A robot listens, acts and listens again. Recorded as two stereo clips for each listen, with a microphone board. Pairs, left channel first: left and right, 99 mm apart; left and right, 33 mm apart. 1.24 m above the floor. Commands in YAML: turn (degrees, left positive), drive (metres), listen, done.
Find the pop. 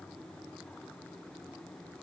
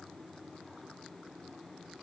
listen: true
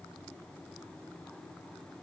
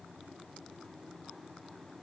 listen: true
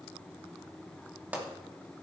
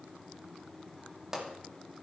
turn: -15
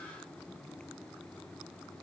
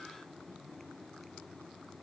listen: true
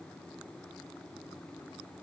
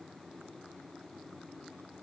done: "I heard a pop, but can't make it out now. It was about straight ahead or 150° right."